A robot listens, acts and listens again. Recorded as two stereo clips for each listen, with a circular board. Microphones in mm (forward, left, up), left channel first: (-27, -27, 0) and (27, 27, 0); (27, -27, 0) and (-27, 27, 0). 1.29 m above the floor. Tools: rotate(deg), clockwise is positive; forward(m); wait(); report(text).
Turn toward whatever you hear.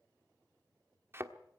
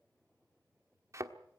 rotate(-95)
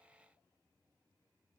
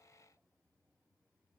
report("I heard a thud from this way, but can't make it out now.")